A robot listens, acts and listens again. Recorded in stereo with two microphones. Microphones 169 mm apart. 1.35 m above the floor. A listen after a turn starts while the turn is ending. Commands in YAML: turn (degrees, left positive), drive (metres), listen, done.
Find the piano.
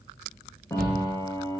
turn: 20
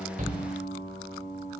turn: 140
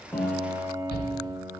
turn: -10
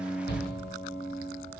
done: "Facing the piano, 1 to 2 m away."